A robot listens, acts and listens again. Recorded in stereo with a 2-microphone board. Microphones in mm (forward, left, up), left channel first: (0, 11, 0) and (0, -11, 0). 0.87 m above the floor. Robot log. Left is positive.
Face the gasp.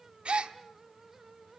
note: The gasp: about 55° right or 125° right.
cmd yaw -55
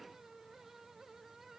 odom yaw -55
cmd idle
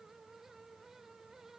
end: I heard a gasp, but can't make it out now. It was about straight ahead or 70° right.